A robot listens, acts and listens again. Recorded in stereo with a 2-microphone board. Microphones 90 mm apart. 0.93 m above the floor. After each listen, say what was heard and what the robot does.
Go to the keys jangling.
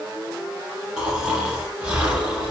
Keep listening.
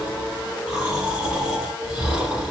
Keep listening.
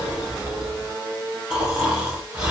I can't make out keys jangling to turn to.